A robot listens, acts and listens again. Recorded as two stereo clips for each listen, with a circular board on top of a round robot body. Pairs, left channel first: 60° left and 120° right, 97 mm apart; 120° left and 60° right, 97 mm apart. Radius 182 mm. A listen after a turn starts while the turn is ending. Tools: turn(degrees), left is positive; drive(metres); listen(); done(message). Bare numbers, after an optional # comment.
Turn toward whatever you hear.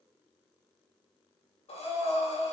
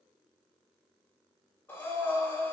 # The breathing: 50° left.
turn(50)
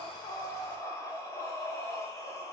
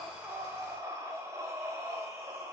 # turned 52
done("Facing the breathing, 2 to 4 m away.")